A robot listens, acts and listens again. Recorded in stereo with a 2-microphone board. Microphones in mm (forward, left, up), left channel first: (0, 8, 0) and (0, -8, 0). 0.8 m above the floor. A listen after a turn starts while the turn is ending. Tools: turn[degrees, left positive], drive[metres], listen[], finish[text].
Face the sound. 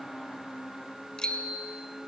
Thought: The bicycle bell: about 55° left or 125° left.
Action: turn[55]
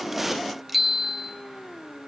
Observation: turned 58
Action: finish[Found it: a bicycle bell, straight ahead, 2 to 4 m away.]